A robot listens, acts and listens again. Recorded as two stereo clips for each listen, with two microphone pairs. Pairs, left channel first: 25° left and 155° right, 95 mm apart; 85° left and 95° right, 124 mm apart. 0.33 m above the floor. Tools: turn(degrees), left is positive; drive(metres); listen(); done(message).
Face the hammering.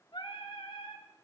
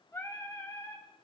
listen()
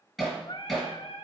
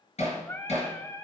turn(degrees=120)
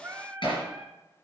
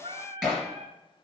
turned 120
done("Found it: hammering, straight ahead, 2 to 4 m away.")